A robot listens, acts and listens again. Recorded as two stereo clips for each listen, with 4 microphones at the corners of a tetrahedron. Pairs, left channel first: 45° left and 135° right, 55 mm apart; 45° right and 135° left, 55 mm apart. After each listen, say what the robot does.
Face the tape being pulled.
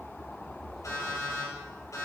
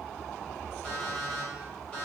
Keep listening.
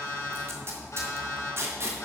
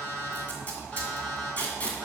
Turn 105° right.
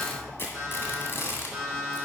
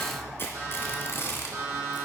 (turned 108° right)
Found it: tape being pulled, straight ahead, 2 to 4 m away.